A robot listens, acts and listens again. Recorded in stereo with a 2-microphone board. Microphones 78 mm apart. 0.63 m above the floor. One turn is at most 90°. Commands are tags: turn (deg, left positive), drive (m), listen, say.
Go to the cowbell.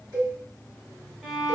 <turn deg="-65"/>
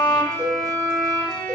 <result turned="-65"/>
<turn deg="-40"/>
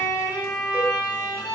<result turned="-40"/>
<listen/>
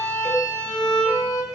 <drive m="1.0"/>
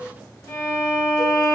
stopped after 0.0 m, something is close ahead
<listen/>
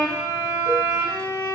<listen/>
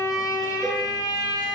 <say>Facing where the cowbell came from. I can't hear it now. I did not reach it.</say>